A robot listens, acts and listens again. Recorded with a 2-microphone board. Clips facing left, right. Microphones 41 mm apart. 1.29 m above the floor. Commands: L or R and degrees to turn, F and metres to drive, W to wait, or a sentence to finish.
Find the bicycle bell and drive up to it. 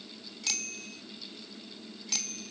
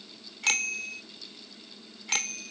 R50
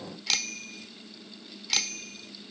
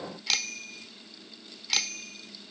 F1.0
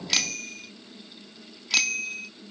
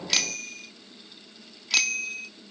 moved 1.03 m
F1.0
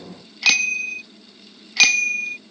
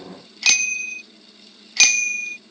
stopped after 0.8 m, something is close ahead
L15
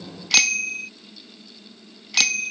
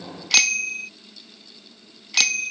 Arrived at the bicycle bell, straight ahead.